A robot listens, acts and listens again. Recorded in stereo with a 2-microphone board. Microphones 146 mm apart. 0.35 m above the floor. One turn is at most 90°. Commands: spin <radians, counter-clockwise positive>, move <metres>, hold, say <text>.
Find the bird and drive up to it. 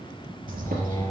spin -1.57
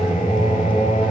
hold
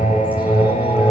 hold
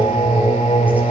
say I heard a bird from this way, but can't make it out now. I did not reach it.